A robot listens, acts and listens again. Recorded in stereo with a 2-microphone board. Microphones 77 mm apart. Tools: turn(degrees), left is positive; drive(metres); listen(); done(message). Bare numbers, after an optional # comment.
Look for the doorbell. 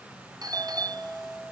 # The doorbell: about 50° right or 130° right.
turn(-50)
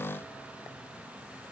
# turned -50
listen()
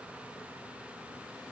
listen()
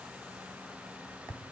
# So it is at 65° right.
turn(-65)
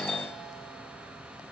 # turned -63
done("Found it: a doorbell, straight ahead.")